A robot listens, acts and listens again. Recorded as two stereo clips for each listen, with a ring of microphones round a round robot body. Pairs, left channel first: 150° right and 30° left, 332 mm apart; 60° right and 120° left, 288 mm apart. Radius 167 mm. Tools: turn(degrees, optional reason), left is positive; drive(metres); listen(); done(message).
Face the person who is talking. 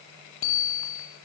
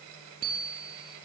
listen()
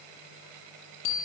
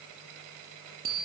listen()
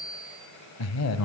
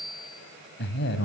turn(degrees=-110, reason="The man speaking: 110° right.")
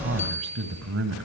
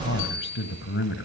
turn(degrees=-15, reason="The man speaking is now 15° right.")
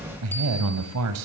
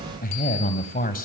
done("Found it: a man speaking, straight ahead.")